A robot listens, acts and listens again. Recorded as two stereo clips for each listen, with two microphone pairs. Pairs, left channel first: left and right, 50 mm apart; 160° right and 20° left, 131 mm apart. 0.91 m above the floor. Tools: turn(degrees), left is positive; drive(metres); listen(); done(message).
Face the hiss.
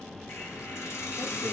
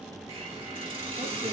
turn(degrees=60)
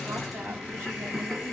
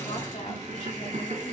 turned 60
done("Facing the hiss, 1 to 2 m away.")